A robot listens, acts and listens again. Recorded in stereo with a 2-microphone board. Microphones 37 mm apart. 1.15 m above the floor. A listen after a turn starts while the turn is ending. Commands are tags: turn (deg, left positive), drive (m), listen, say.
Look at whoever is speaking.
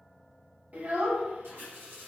<turn deg="-45"/>
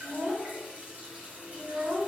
<turn deg="-90"/>
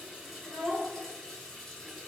<turn deg="-35"/>
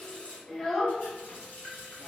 <turn deg="10"/>
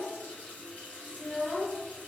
<say>Found it: a child speaking, straight ahead.</say>